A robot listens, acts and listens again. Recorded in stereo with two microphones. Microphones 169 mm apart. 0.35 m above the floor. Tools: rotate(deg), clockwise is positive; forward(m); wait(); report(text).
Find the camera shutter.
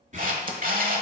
rotate(55)
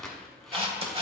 rotate(40)
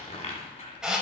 report("Found it: a camera shutter, straight ahead, 1 to 2 m away.")